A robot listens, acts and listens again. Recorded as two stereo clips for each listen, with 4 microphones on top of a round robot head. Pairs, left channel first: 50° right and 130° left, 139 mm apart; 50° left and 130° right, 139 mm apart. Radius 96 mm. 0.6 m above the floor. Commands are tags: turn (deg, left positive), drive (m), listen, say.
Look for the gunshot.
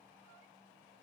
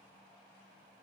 <listen/>
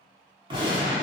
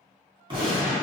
<turn deg="180"/>
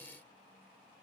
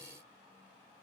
<say>Facing where the gunshot came from. I can't hear it now.</say>